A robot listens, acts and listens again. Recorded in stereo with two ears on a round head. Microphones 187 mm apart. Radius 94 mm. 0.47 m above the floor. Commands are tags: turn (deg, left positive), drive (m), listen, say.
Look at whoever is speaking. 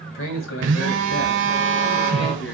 <turn deg="65"/>
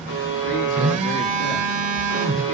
<listen/>
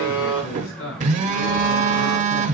<turn deg="65"/>
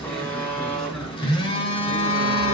<listen/>
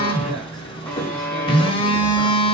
<listen/>
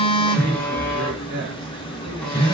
<say>Found it: a man speaking, straight ahead.</say>